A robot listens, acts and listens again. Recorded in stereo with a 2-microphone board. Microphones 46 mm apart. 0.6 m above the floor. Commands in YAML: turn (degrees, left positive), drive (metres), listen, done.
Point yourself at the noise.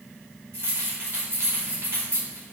turn: -70
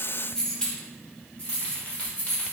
turn: 45
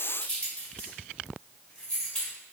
turn: 20
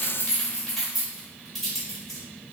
done: "Facing the keys jangling, 1 to 2 m away."